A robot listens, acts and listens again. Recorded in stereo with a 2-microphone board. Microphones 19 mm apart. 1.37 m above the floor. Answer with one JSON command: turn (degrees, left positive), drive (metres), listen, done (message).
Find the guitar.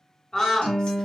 {"turn": 90}
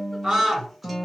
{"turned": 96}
{"done": "Facing the guitar."}